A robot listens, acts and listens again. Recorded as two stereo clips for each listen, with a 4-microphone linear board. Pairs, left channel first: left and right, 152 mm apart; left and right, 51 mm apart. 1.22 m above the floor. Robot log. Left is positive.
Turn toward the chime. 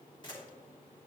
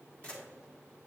cmd idle
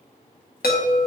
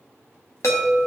cmd yaw +90
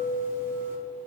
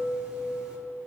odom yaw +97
note: So it is at 15° right.
cmd yaw -15
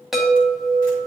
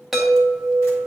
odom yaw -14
end: Found it: a chime, straight ahead.